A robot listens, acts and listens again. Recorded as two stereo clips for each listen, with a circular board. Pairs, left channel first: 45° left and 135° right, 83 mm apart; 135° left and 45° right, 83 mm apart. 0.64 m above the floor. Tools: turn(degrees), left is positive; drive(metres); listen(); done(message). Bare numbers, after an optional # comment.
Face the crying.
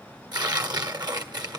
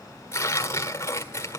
listen()
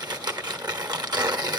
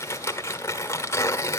listen()
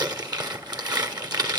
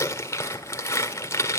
done("I can't make out crying, only tearing paper.")